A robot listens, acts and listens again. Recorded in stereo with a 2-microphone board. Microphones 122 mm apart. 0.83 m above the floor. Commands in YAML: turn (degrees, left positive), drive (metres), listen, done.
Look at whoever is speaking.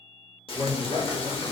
turn: -50
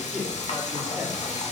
turn: -10
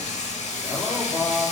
done: "Facing the man speaking."